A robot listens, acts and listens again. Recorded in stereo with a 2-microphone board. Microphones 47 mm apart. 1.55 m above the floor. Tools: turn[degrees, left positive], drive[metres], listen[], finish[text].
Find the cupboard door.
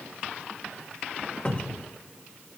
Thought: The cupboard door: about 30° left or 150° left.
Action: turn[30]
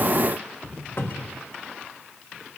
Thought: So it is at 120° left.
Action: turn[120]
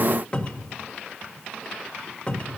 Thought: The cupboard door is now 25° left.
Action: turn[25]
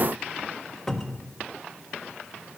Action: finish[Found it: a cupboard door, straight ahead, 1 to 2 m away.]